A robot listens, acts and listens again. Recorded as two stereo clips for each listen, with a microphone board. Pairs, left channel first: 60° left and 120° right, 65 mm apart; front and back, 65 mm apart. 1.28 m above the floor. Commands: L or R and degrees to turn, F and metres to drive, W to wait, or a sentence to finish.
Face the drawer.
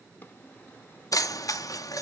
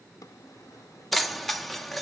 Facing the drawer, under 1 m away.